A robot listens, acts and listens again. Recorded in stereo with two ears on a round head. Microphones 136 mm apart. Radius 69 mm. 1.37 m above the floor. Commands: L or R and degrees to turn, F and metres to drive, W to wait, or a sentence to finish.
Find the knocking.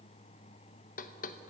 L55
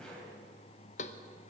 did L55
L55
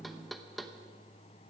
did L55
Facing the knocking, under 1 m away.